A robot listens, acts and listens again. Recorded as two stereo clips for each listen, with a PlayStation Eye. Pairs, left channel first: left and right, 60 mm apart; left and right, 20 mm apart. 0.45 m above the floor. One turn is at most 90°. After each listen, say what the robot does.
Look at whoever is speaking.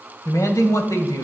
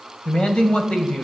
Turn 60° left.
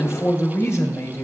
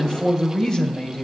Turn 55° left.
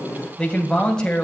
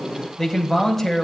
Turn 15° left.
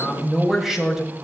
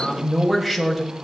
Found it: a man speaking, straight ahead.